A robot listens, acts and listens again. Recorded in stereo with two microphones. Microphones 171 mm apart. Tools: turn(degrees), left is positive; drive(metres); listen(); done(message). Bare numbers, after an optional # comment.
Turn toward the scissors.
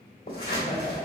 # The scissors: about 60° left or 120° left.
turn(60)
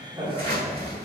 # So it is at 60° left.
turn(60)
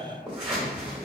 done("Found it: scissors, straight ahead.")